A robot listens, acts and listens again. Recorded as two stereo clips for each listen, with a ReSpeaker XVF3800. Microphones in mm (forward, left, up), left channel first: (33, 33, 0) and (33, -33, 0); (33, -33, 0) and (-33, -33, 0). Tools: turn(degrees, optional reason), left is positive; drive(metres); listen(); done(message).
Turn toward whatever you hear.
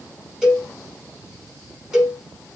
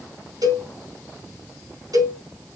turn(degrees=-170, reason="The cowbell: 170° right.")
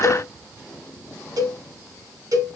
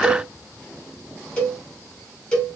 turn(degrees=-75, reason="The cowbell is now 75° right.")
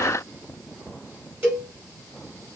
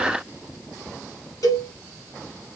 turn(degrees=-30, reason="The cowbell is now 30° right.")
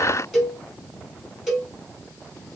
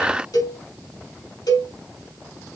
done("Facing the cowbell.")